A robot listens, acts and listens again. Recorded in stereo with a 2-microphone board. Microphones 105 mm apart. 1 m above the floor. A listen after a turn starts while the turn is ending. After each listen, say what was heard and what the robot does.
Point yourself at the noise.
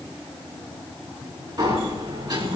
The sliding door: about 35° right or 145° right. Turn 35° right.
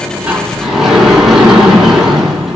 Found it: a sliding door, straight ahead.